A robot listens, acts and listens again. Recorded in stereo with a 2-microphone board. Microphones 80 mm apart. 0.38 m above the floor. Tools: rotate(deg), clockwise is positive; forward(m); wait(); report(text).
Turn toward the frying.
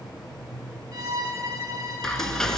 rotate(-30)
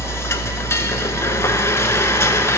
rotate(-145)
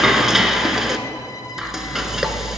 report("Found it: frying, straight ahead.")